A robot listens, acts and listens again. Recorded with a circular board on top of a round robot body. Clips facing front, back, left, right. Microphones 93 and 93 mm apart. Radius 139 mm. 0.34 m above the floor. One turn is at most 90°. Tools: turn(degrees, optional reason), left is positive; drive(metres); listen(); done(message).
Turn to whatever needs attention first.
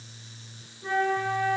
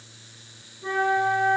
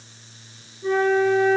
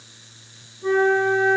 listen()
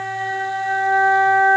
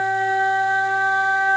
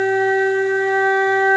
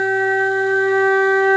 listen()
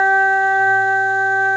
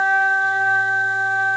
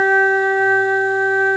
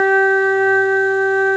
done("I can't make out anything urgent to turn to.")